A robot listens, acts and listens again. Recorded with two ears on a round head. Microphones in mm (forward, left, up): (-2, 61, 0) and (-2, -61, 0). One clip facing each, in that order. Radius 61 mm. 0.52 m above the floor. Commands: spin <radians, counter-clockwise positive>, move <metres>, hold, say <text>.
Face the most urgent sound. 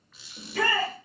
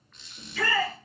spin 0.79
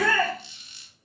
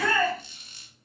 spin 1.40
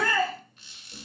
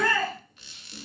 say Facing the shout, 1 to 2 m away.